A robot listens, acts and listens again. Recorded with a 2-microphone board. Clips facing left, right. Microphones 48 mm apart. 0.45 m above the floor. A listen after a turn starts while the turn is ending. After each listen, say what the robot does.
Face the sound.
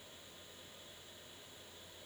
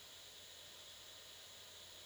Keep listening.
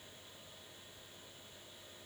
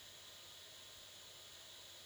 Keep listening.
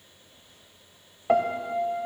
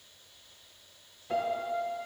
Turn 75° left.
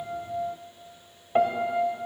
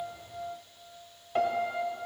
Turn 20° left.
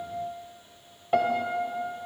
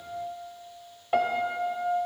Facing the piano.